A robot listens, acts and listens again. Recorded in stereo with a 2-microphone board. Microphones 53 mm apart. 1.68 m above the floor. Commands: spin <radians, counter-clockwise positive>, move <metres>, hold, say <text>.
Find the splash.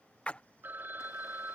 spin 0.44
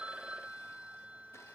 hold
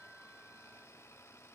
say I heard a splash, but can't make it out now. It was about straight ahead or 130° left.